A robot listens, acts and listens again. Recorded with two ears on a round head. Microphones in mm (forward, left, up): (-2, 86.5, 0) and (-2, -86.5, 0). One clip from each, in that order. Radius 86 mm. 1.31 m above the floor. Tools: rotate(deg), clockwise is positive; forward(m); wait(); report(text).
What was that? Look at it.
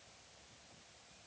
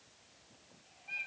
wait()
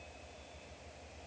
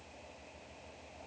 wait()
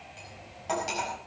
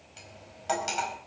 rotate(35)
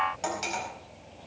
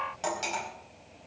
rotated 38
report("Found it: cutlery clinking, straight ahead, over 4 m away.")